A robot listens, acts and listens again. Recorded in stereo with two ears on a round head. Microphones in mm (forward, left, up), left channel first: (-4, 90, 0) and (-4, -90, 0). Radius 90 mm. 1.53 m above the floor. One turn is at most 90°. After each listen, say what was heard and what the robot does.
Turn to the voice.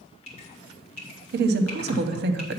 The woman speaking: about 55° right or 125° right. Turn 55° right.
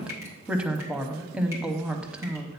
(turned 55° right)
Found it: a woman speaking, straight ahead.